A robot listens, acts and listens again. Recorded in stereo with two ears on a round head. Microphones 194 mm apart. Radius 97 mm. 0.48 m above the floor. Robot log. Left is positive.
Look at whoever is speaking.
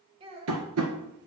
note: The child speaking: about 25° right or 155° right.
cmd yaw -25
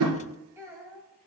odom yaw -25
cmd yaw -30
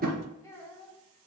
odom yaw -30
note: So it is at 10° left.
cmd yaw +10
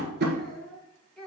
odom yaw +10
end: Facing the child speaking.